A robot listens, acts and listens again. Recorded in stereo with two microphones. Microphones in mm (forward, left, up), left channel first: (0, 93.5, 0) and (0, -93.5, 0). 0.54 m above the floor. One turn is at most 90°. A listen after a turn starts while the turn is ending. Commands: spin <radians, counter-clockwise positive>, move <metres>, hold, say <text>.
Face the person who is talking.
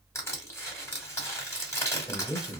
spin 0.44
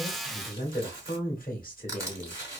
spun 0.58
spin 1.57
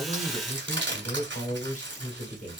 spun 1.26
spin 0.87
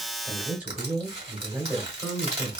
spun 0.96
spin -0.17
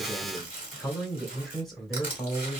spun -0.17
say Found it: a man speaking, straight ahead, 1 to 2 m away.